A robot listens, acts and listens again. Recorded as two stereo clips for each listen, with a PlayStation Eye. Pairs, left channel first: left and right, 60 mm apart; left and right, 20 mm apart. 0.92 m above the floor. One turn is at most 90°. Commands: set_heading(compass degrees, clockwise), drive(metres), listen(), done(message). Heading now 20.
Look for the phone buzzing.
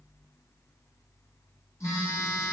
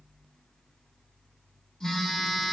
set_heading(320)
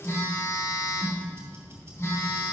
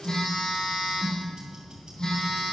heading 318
set_heading(263)
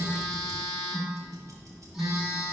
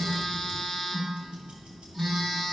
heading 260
done("Found it: a phone buzzing, straight ahead.")